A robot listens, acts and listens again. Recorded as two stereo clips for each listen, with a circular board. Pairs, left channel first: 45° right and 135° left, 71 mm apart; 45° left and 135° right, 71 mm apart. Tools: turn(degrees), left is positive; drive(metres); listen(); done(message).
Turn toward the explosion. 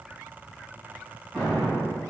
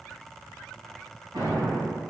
turn(degrees=-130)
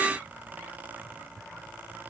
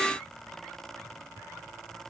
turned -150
turn(degrees=20)
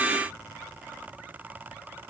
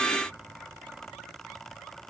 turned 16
done("Facing where the explosion came from. I can't hear it now.")